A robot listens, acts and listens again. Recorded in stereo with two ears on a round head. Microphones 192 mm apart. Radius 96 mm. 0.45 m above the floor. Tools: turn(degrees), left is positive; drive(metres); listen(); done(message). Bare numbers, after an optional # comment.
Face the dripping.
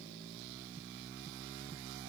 listen()
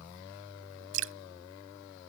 # The dripping: about 65° right or 115° right.
turn(-65)
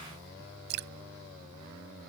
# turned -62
# So it is at 55° right.
turn(-55)
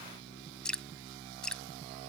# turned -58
done("Facing the dripping.")